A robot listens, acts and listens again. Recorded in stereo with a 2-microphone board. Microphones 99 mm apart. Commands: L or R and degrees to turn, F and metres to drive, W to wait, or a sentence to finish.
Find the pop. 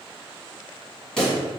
L30
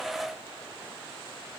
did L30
W
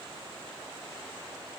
I heard a pop, but can't make it out now. It was about 25° right or 145° left.